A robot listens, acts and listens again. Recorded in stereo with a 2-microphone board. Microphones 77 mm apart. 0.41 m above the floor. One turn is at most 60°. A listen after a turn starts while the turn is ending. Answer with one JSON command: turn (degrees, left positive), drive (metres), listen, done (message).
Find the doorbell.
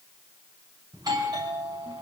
{"turn": -60}
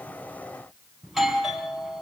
{"done": "Found it: a doorbell, straight ahead, over 4 m away."}